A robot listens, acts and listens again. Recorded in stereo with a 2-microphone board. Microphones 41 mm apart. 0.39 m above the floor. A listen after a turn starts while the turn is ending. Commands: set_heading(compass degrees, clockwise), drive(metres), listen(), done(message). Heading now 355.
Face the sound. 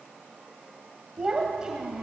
set_heading(25)
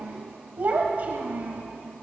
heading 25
set_heading(160)
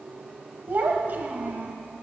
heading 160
set_heading(215)
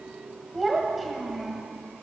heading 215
done("Found it: a child speaking, straight ahead, 1 to 2 m away.")